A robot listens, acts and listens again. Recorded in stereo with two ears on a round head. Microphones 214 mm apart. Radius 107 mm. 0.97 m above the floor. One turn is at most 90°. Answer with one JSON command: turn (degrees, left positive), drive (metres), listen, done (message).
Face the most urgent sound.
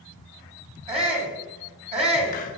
{"turn": -25}
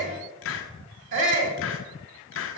{"turn": -90}
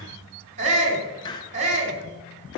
{"turn": -30}
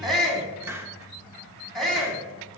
{"done": "Found it: a shout, straight ahead."}